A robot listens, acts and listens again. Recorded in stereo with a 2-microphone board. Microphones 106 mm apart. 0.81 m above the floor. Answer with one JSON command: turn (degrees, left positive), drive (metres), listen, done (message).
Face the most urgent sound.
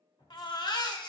{"turn": 40}
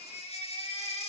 {"turn": 95}
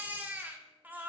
{"turn": -15}
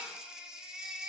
{"done": "Facing the baby crying."}